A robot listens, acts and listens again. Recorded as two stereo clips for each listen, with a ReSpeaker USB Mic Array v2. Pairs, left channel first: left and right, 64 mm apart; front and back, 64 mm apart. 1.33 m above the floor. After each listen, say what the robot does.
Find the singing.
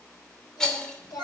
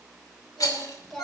Turn 90° left.
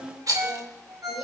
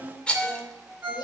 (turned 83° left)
Facing the singing.